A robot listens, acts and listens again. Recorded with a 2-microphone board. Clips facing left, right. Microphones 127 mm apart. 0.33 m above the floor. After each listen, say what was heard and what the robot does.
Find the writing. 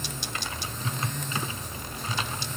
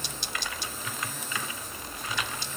Keep listening.
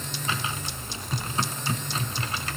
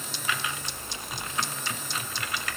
Keep listening.
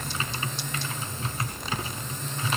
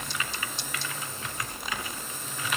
I can't make out writing to turn to.